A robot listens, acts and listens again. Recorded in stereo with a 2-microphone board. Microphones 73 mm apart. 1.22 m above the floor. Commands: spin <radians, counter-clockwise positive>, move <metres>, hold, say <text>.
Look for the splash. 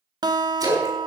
spin -0.87
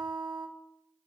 hold
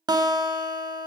say I heard a splash, but can't make it out now. It was about straight ahead or 80° right.